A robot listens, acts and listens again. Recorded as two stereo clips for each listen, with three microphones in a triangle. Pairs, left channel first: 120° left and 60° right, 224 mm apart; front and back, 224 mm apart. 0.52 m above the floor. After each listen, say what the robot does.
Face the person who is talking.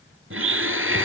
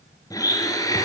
Keep listening.
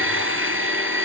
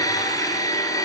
Keep listening.
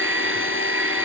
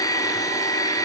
I can't make out anyone speaking, only a blender.